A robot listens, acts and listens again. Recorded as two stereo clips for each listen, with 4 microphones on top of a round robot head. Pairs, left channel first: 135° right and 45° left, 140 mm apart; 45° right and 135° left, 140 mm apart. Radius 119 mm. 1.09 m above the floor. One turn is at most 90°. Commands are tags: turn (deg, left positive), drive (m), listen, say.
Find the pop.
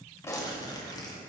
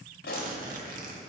<turn deg="-65"/>
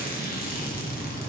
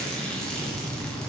<say>Facing where the pop came from. I can't hear it now.</say>